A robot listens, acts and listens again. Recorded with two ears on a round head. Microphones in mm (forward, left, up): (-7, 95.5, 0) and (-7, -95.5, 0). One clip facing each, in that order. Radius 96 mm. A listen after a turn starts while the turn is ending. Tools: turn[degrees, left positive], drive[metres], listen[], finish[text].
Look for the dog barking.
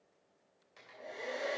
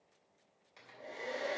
Action: listen[]
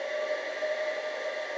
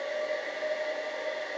Action: listen[]
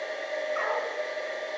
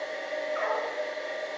Thought: The dog barking: about 50° left or 130° left.
Action: turn[50]
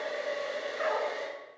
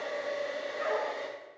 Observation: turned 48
Thought: So it is at 80° left.
Action: turn[80]
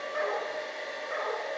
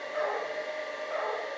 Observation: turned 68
Thought: The dog barking is now 20° left.
Action: turn[20]
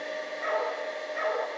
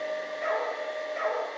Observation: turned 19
Action: finish[Found it: a dog barking, straight ahead.]